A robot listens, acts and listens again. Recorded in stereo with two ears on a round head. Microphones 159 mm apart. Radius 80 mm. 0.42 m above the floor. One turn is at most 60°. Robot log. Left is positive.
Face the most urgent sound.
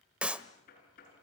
cmd idle
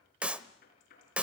cmd idle
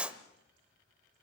end: I can't make out anything urgent to turn to.